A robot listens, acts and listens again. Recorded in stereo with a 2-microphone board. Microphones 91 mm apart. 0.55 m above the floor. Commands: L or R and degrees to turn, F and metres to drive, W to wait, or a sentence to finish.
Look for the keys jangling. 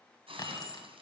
L50
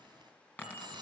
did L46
L20
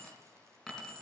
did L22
Facing the keys jangling.